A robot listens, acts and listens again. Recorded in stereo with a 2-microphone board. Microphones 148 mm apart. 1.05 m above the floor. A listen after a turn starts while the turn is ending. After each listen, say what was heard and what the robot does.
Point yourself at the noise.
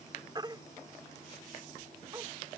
The baby crying: about 30° right or 150° right. Turn 30° right.
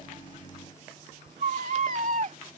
So it is at 120° right. Turn 120° right.
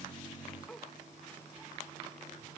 Keep listening.
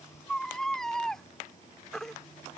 Found it: a baby crying, straight ahead.